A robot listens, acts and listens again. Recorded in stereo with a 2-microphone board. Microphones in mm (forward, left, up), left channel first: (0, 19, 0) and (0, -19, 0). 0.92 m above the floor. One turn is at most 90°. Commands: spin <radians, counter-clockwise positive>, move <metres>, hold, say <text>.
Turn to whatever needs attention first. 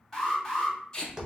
spin 0.52
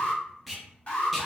spin 1.57
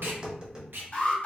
spin 0.79
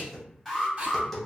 spin 0.17
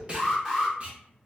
say Facing the alarm, 1 to 2 m away.